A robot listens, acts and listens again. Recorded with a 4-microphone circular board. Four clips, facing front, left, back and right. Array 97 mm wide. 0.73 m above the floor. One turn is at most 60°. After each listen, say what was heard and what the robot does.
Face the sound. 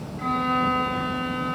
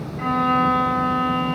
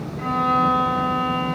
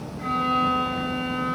The violin: 95° left. Turn 60° left.
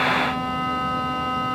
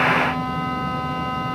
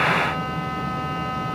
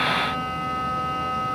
Nothing new. It was at 35° left. Turn 35° left.
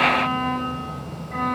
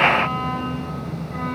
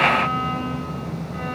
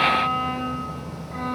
Keep listening.
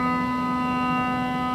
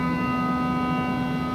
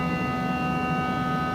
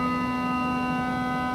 Found it: a violin, straight ahead.